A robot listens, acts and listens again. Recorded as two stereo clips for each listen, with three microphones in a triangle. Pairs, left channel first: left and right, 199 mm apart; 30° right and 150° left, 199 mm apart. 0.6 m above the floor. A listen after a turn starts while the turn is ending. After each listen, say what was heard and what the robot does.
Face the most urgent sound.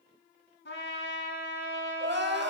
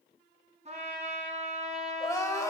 The crying: 105° right. Turn 105° right.
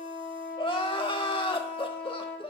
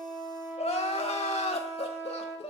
The crying is now 25° left. Turn 25° left.
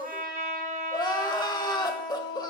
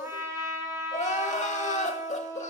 The crying is now 20° left. Turn 20° left.
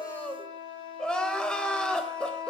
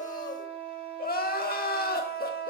Facing the crying.